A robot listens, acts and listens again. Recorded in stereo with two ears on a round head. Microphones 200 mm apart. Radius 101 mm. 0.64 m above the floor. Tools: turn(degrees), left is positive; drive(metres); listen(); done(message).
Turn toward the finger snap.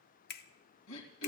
turn(degrees=45)
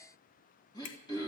turn(degrees=80)
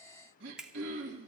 done("Found it: a finger snap, straight ahead.")